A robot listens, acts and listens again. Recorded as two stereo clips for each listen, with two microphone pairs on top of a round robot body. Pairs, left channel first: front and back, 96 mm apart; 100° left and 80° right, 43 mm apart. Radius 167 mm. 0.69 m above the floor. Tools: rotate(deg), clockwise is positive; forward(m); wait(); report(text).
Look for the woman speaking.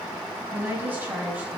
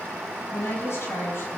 rotate(-105)
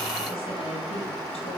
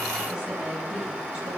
rotate(15)
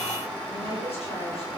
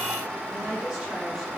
report("Facing the woman speaking, over 4 m away.")